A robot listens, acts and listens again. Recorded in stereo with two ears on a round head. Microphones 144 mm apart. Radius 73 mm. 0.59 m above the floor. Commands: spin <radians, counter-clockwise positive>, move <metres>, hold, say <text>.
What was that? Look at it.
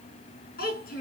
spin 1.13
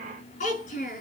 spin 0.87
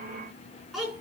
say Facing the child speaking, over 4 m away.